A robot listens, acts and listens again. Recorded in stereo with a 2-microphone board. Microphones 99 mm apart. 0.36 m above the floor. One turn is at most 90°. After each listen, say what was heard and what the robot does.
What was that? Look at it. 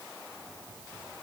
Keep listening.
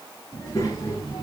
The child speaking: about 35° left or 145° left. Turn 35° left.
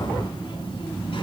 So it is at 110° left. Turn 90° left.
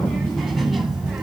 Found it: a child speaking, straight ahead, 1 to 2 m away.